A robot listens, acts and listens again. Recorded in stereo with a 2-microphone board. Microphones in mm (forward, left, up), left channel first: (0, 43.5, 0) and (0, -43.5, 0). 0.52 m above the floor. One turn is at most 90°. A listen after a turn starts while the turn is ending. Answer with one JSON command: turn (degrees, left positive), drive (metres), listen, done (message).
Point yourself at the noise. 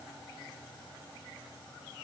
{"listen": true}
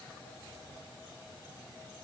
{"listen": true}
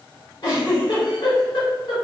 {"turn": 60}
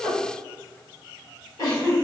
{"turn": 50}
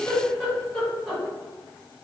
{"turn": 10}
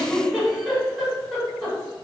{"done": "Found it: a giggle, straight ahead."}